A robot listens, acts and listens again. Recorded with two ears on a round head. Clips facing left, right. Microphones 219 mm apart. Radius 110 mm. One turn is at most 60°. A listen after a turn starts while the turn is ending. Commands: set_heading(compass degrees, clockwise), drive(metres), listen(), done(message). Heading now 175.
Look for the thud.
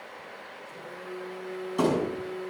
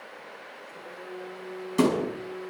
set_heading(210)
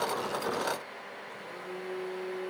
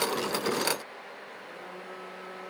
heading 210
listen()
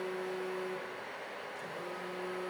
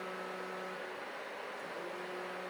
done("I heard a thud, but can't make it out now. It was about straight ahead or 110° right.")